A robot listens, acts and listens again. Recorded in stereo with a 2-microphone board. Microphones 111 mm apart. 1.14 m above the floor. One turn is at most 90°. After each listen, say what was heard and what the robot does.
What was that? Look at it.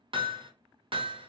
The hammering: about 50° right or 130° right. Turn 50° right.
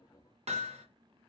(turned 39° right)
So it is at 85° right. Turn 85° right.
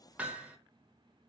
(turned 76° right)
The hammering is now 10° right. Turn 10° right.
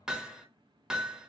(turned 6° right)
Facing the hammering, under 1 m away.